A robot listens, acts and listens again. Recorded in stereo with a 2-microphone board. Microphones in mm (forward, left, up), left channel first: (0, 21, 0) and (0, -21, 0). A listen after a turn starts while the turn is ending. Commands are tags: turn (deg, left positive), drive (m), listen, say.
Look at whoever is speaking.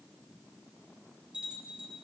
<listen/>
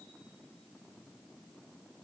<listen/>
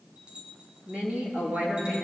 <turn deg="-30"/>
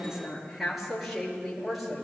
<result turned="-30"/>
<say>Found it: a woman speaking, straight ahead, over 4 m away.</say>